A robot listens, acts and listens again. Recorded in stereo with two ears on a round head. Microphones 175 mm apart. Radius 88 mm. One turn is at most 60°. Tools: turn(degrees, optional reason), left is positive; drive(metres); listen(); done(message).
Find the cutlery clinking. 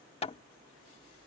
listen()
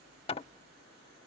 listen()
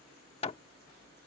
done("I can't make out cutlery clinking to turn to.")